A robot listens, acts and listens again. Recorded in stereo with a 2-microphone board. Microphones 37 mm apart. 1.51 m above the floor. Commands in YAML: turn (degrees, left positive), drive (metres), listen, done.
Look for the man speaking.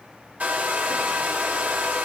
listen: true
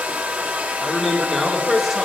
turn: -30
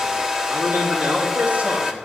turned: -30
turn: -140
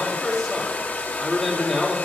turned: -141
done: "Found it: a man speaking, straight ahead."